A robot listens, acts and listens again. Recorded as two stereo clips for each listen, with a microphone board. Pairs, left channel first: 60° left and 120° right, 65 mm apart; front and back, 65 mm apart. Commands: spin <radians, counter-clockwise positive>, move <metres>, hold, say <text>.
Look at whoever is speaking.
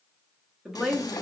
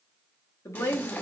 spin -0.70
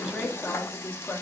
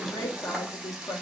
say Found it: a woman speaking, straight ahead, 1 to 2 m away.